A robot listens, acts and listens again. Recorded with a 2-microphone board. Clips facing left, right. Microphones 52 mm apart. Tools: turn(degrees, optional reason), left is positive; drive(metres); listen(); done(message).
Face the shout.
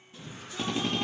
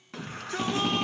turn(degrees=-75, reason="The shout: about 75° right or 105° right.")
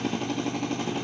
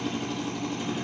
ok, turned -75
listen()
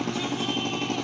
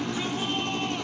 listen()
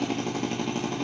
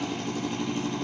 done("I heard a shout, but can't make it out now. It was about straight ahead or 30° right.")